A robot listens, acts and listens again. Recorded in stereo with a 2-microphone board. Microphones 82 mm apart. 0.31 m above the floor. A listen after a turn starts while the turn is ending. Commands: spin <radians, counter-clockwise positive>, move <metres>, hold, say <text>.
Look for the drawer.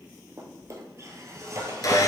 spin -0.70
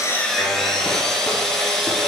hold
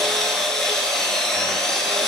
hold
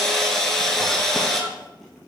say I heard a drawer, but can't make it out now. It was about straight ahead or 100° right.